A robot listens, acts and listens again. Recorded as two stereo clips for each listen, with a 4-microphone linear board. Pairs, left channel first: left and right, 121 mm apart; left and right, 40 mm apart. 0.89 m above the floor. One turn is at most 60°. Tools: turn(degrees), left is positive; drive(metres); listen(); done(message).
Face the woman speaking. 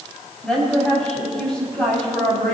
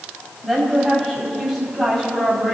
turn(degrees=30)
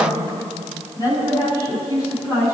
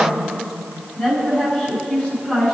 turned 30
turn(degrees=60)
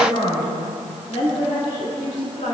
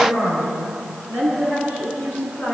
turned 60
turn(degrees=60)
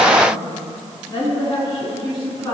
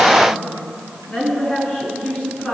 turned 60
turn(degrees=35)
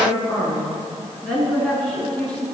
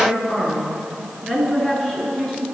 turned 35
done("Facing the woman speaking.")